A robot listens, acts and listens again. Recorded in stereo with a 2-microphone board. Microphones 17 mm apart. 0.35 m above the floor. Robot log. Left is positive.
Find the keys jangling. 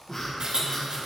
note: The keys jangling: about 70° right or 110° right.
cmd yaw -70
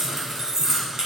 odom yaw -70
note: So it is at 30° right.
cmd yaw -30
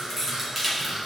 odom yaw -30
end: Found it: keys jangling, straight ahead.